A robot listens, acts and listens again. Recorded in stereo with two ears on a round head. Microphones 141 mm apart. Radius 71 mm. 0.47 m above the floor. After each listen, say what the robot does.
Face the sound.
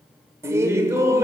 Turn 20° right.
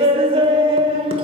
Turn 135° right.
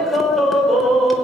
Facing the laughter, 1 to 2 m away.